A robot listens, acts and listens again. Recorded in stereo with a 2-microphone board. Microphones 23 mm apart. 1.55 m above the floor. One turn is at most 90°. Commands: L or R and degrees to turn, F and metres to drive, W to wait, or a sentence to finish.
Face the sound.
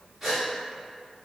R30
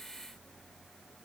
W
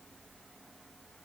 I heard a gasp, but can't make it out now. It was about 15° left or 135° right.